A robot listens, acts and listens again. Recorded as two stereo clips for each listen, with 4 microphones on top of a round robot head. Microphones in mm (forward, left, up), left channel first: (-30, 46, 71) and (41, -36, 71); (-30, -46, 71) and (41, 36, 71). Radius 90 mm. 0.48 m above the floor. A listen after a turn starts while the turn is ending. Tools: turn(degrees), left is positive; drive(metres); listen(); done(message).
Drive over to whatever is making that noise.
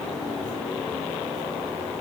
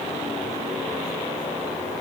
listen()
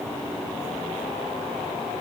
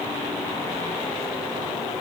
listen()
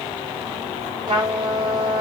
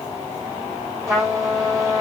turn(degrees=-10)
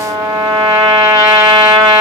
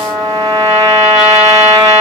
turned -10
drive(metres=1.0)
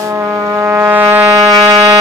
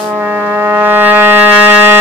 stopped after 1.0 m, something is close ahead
turn(degrees=-10)
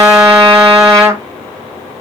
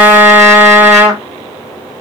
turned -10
done("I am next to the trumpet.")